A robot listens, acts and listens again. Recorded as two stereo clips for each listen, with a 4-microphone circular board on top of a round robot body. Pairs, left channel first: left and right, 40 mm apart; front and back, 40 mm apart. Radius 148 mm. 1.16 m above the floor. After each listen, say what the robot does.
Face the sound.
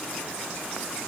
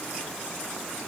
Keep listening.
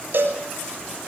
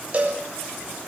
Turn 125° right.
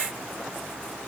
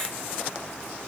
Keep listening.
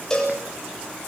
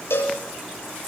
Turn 15° left.
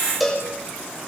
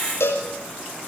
Facing the cowbell.